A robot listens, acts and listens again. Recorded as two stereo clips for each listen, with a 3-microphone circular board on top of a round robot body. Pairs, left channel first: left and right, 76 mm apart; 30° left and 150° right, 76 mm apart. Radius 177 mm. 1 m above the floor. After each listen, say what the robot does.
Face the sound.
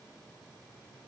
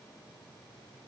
Keep listening.
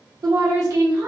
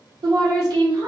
Turn 135° right.
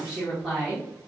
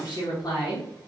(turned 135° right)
Facing the woman speaking, 1 to 2 m away.